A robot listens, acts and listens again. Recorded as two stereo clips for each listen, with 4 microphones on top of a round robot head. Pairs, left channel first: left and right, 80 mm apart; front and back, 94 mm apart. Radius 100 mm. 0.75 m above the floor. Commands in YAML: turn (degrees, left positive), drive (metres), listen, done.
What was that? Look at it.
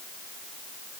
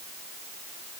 listen: true
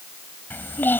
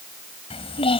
turn: 25
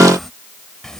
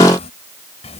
done: "Facing the child speaking."